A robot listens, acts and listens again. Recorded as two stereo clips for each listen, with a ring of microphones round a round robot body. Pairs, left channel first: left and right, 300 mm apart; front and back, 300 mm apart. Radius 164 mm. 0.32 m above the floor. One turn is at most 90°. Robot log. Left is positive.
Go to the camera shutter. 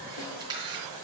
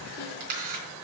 note: The camera shutter: 165° right.
cmd yaw -90
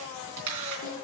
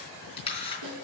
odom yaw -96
note: The camera shutter is now 70° right.
cmd yaw -70
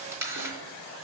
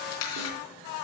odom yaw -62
note: The camera shutter is now 10° right.
cmd yaw -10
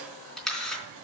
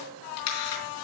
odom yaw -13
cmd fwd 1.0
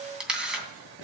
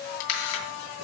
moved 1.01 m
cmd fwd 1.0
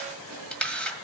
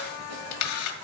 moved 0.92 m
cmd fwd 1.0
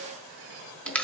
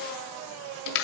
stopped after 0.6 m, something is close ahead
end: I am next to the camera shutter.